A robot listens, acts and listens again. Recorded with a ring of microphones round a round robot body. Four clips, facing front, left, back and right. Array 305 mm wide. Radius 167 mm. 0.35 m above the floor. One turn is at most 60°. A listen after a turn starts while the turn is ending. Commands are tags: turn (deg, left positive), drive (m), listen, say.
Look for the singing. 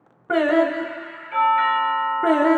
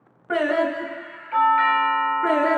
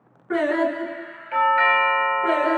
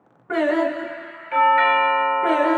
<turn deg="-20"/>
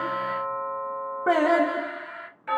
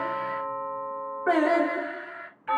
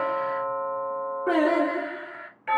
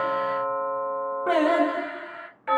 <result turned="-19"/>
<turn deg="-30"/>
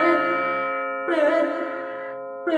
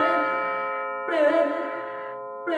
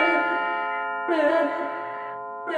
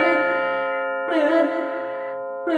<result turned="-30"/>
<turn deg="-20"/>
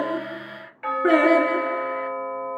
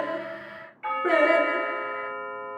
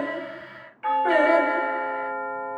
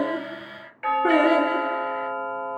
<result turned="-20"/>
<listen/>
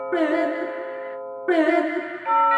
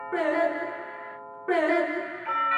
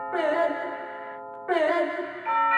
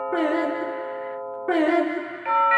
<say>Found it: singing, straight ahead, 2 to 4 m away.</say>